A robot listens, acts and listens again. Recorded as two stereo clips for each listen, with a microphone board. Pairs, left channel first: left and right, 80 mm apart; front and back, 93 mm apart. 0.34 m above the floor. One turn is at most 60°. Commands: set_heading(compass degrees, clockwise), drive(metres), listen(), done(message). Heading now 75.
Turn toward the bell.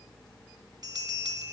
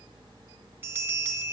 set_heading(135)
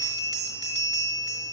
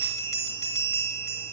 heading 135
set_heading(190)
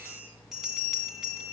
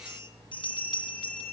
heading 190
done("Found it: a bell, straight ahead.")